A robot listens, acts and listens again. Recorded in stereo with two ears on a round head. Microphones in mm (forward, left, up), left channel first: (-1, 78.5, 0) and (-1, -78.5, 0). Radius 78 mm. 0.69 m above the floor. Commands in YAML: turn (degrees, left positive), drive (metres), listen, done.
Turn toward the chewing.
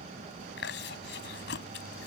turn: 70
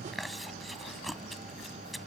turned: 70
done: "Facing the chewing."